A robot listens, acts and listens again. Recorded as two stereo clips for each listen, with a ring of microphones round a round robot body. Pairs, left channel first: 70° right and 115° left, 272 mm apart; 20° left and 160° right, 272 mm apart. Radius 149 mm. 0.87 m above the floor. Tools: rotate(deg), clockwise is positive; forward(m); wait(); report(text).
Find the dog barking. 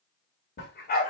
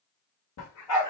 report("Facing the dog barking.")